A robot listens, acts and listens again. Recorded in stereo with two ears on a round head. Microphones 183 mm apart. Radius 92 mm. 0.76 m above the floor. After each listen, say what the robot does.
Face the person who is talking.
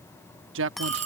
Turn 70° right.
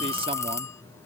Keep listening.
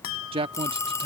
Turn 30° right.
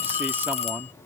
Turn 10° right.
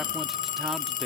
Keep listening.
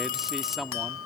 Found it: a man speaking, straight ahead.